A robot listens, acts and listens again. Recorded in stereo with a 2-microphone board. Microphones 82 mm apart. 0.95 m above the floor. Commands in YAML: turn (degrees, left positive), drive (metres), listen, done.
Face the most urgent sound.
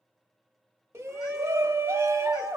turn: -35
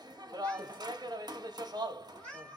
turn: -105
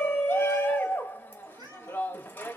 turn: 30
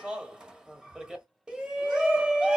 turn: -10
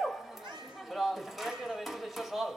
done: "Found it: a shout, straight ahead."